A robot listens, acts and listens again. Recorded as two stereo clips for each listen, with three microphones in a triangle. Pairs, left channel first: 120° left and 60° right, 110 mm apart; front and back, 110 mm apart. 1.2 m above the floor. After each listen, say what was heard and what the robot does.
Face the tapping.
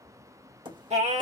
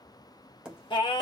The tapping: 100° right. Turn 100° right.
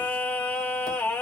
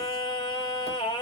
Keep listening.
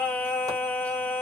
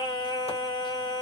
Keep listening.
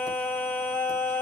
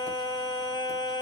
Facing where the tapping came from. I can't hear it now.